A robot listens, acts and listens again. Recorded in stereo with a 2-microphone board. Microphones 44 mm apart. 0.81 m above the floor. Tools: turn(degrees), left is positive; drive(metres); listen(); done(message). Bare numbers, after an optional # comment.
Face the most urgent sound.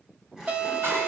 # The alarm: about 35° right or 145° right.
turn(-35)
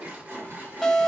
done("Facing the alarm, 1 to 2 m away.")